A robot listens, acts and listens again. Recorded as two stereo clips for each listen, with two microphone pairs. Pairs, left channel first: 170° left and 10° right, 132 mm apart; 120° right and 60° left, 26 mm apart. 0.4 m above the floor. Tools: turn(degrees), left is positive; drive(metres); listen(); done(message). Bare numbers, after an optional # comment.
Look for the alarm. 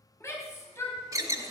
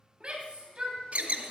# The alarm: 50° left.
turn(50)
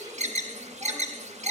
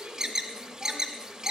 done("Found it: an alarm, straight ahead.")